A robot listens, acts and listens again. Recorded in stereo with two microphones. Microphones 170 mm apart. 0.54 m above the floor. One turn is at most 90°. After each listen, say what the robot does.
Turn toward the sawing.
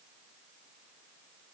Keep listening.
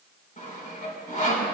Turn 50° left.
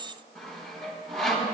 Found it: sawing, straight ahead.